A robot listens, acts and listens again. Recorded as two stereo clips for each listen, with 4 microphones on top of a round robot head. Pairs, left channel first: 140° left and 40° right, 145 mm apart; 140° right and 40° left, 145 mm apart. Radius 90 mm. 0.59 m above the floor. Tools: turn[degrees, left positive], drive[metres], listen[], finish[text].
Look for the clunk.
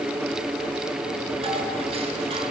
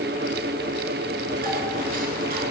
Action: listen[]
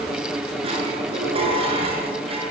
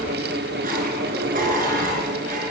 Action: listen[]
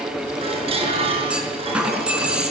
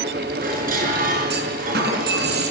Thought: The clunk: 40° left.
Action: turn[40]
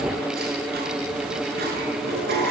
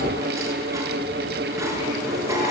Action: finish[I heard a clunk from this way, but can't make it out now.]